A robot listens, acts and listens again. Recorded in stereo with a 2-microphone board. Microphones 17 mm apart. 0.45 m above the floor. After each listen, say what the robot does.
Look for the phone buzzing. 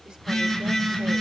Turn 30° left.
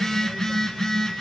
Turn 145° left.
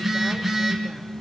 Facing the phone buzzing, 2 to 4 m away.